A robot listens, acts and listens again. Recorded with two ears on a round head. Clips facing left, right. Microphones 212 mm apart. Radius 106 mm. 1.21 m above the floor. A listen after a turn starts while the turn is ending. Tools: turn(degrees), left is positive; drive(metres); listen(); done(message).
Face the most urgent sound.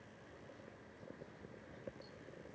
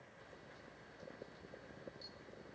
listen()
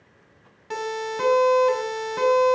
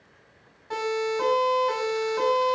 turn(degrees=45)
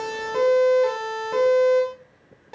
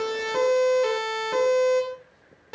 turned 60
turn(degrees=-15)
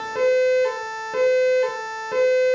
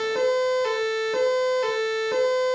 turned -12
done("Found it: a siren, straight ahead.")